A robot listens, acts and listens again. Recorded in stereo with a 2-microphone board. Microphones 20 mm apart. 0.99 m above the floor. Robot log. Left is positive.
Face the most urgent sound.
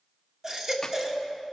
note: The baby crying: about 30° right or 150° right.
cmd yaw -30
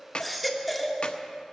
end: Found it: a baby crying, straight ahead.